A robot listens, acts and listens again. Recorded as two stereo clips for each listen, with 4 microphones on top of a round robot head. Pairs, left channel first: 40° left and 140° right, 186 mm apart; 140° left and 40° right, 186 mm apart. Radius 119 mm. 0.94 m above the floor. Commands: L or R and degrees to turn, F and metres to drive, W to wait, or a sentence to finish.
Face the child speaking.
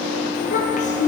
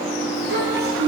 R10
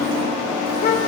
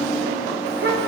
Facing the child speaking, 2 to 4 m away.